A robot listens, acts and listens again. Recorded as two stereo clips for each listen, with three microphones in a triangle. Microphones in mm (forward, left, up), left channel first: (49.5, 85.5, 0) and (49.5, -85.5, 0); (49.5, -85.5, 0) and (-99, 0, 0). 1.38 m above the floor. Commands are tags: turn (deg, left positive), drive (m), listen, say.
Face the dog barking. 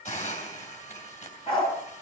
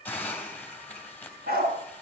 <turn deg="145"/>
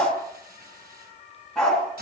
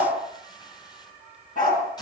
<say>Facing the dog barking.</say>